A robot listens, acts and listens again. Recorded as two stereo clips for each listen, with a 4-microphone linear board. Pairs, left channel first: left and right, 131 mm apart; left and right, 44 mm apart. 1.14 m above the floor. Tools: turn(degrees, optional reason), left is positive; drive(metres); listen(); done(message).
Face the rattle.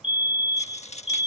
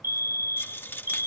turn(degrees=55, reason="The rattle: about 55° left or 125° left.")
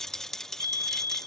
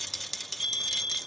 done("Facing the rattle.")